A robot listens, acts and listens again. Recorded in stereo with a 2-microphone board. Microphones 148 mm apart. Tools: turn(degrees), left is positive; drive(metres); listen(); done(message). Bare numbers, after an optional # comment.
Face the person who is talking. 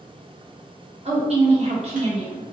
# The woman speaking: about 45° right or 135° right.
turn(-45)
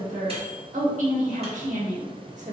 # So it is at 80° right.
turn(-80)
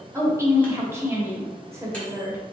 # The woman speaking is now 20° right.
turn(-20)
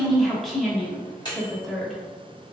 done("Facing the woman speaking, 1 to 2 m away.")